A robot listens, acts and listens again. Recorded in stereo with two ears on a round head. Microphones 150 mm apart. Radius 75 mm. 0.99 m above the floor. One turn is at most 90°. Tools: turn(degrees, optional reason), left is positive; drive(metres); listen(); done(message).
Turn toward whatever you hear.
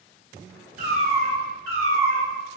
turn(degrees=-65, reason="The cat meowing: about 65° right or 115° right.")
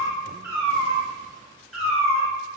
done("Facing the cat meowing.")